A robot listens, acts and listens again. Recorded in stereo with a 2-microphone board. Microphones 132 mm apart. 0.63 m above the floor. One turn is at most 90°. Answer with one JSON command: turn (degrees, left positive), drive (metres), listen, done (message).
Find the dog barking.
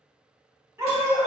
{"turn": -20}
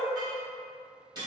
{"listen": true}
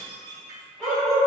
{"done": "Found it: a dog barking, straight ahead, 1 to 2 m away."}